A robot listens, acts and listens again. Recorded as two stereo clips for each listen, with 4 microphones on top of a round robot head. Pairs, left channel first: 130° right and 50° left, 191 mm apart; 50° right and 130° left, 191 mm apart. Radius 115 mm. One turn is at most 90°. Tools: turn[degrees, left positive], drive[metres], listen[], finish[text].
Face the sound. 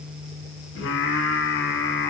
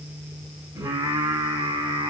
Thought: The singing: 165° right.
Action: turn[-90]
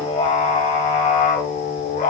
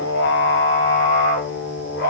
Thought: The singing is now 85° right.
Action: turn[-85]
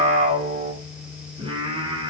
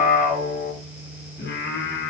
Thought: The singing is now 15° right.
Action: turn[-15]
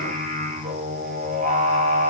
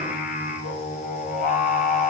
Action: finish[Found it: singing, straight ahead, 2 to 4 m away.]